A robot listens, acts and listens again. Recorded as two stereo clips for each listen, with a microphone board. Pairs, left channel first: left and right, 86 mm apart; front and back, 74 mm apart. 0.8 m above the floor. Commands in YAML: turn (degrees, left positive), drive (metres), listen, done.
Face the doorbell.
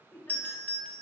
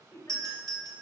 turn: 155
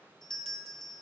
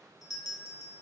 turn: 10
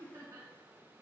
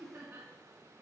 listen: true
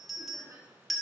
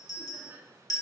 done: "Found it: a doorbell, straight ahead, 1 to 2 m away."